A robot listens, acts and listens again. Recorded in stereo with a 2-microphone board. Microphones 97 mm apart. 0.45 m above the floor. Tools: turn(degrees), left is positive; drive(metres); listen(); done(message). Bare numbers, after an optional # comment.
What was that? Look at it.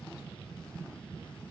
listen()
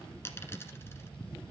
# The dropped coin: about 25° left or 155° left.
turn(25)
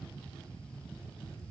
listen()
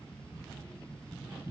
done("I heard a dropped coin, but can't make it out now. It was about straight ahead or 130° left.")